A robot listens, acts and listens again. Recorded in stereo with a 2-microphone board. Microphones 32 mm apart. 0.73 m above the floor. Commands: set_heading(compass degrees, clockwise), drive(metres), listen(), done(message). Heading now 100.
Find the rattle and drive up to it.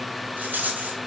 set_heading(170)
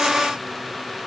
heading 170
listen()
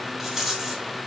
set_heading(180)
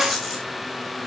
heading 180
drive(1.0)
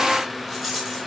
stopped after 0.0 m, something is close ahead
set_heading(190)
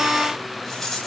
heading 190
done("Something is in my way. I am facing the rattle but have not reached it.")